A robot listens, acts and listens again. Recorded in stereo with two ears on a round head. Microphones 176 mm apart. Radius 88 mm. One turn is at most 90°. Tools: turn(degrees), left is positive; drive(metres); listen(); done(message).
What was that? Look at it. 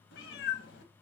turn(degrees=60)
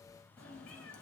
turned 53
done("Found it: a cat meowing, straight ahead.")